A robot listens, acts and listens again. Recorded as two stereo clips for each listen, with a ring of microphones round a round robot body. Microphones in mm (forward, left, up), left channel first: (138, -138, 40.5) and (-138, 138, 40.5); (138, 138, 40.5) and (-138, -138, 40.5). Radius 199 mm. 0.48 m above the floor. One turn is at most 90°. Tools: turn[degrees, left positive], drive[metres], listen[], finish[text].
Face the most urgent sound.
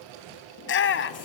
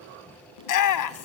Thought: The shout: 10° left.
Action: turn[10]
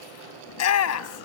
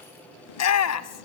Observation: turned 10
Action: finish[Found it: a shout, straight ahead.]